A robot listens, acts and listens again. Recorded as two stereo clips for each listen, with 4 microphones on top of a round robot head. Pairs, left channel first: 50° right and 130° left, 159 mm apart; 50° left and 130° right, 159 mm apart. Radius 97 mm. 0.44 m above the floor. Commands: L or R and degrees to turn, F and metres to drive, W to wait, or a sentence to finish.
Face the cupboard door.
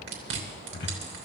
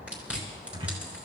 R75
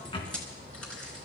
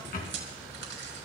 L10
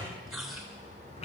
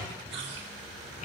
Facing the cupboard door.